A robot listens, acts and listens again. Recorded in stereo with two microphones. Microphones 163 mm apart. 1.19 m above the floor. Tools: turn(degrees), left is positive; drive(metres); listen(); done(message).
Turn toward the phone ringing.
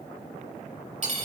listen()
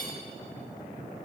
listen()
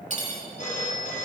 turn(degrees=50)
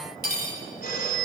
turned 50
turn(degrees=80)
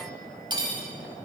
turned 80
listen()
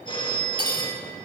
turn(degrees=30)
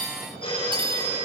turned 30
turn(degrees=35)
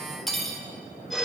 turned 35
done("Found it: a phone ringing, straight ahead.")